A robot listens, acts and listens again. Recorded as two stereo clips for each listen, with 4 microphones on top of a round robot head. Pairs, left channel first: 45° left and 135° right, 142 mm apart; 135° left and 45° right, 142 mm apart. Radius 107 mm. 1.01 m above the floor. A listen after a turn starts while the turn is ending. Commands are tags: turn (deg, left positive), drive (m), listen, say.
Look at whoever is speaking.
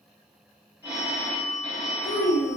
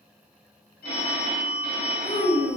<turn deg="80"/>
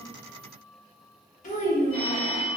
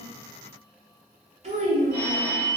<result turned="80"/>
<say>Facing the child speaking, 1 to 2 m away.</say>